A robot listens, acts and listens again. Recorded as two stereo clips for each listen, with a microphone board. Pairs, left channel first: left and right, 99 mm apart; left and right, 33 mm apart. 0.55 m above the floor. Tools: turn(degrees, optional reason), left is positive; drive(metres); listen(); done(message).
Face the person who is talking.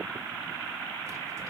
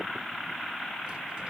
listen()
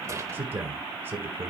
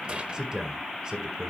turn(degrees=-25, reason="The man speaking: about 25° right or 155° right.")
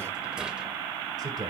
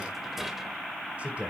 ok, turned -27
turn(degrees=-130, reason="So it is at 130° right.")
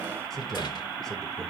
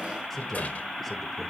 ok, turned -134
done("Facing the man speaking.")